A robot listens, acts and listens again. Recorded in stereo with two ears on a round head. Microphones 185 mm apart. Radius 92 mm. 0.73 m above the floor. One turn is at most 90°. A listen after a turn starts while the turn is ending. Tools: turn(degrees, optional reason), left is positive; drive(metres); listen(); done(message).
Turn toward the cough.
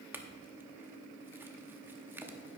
listen()
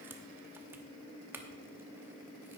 listen()
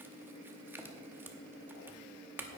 done("I can't make out a cough, only a clink.")